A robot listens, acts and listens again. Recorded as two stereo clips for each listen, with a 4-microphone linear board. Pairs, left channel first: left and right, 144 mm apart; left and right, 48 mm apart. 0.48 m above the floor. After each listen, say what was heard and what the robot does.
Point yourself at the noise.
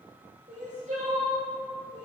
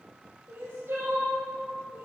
The crying: about 60° right or 120° right. Turn 60° right.
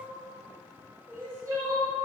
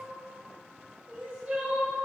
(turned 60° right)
So it is at 25° right. Turn 25° right.
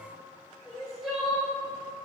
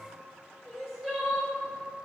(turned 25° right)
Found it: crying, straight ahead.